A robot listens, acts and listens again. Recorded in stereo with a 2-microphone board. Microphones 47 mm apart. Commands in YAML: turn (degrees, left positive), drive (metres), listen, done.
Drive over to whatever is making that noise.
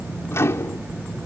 turn: 75
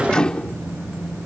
turn: 20
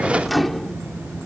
drive: 1.0
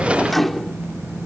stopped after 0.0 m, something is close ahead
done: "Something is in my way. I am facing the microwave but have not reached it."